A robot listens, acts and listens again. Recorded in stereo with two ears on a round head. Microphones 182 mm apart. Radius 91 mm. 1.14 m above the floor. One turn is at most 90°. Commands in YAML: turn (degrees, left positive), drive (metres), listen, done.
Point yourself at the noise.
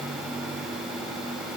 listen: true
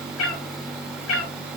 turn: 75
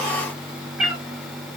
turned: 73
done: "Found it: a cat meowing, straight ahead."